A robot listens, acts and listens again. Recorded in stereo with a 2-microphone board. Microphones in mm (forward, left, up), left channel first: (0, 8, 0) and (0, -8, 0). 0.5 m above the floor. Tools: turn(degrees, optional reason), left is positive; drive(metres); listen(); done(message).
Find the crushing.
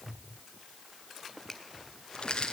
turn(degrees=70, reason="The crushing: about 70° left or 110° left.")
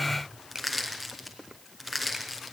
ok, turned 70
done("Facing the crushing, over 4 m away.")